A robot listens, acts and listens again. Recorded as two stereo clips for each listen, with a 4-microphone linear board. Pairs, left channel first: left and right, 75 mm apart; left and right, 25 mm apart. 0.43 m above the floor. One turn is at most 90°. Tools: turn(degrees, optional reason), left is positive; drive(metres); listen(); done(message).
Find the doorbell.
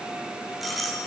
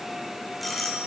turn(degrees=30)
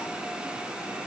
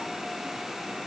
listen()
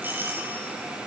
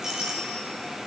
turn(degrees=-30, reason="So it is at 30° right.")
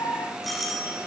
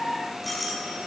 done("Facing the doorbell.")